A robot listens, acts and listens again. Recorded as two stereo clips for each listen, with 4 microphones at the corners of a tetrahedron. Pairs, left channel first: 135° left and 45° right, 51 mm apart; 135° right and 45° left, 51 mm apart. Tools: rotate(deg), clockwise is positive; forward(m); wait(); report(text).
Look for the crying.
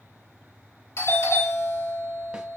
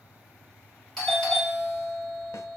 wait()
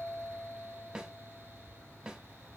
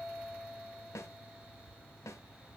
wait()
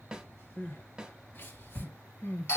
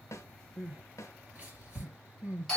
rotate(-100)
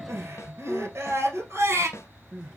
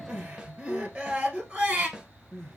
rotate(20)
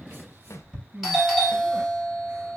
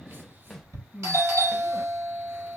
report("Found it: crying, straight ahead.")